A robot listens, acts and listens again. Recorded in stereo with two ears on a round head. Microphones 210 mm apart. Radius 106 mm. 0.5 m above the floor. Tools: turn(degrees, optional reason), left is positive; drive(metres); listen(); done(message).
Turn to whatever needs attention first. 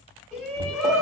turn(degrees=30)
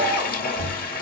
listen()
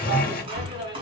turn(degrees=-25, reason="So it is at 25° right.")
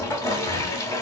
listen()
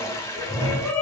done("Facing the shout, 2 to 4 m away.")